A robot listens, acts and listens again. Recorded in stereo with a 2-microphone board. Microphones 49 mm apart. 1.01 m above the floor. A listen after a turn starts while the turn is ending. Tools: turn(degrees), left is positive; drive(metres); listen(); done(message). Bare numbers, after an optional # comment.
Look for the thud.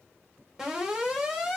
listen()
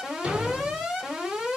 # The thud: about 25° right or 155° right.
turn(-25)
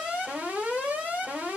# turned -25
listen()
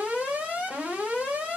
done("I heard a thud, but can't make it out now. It was about straight ahead or 130° right.")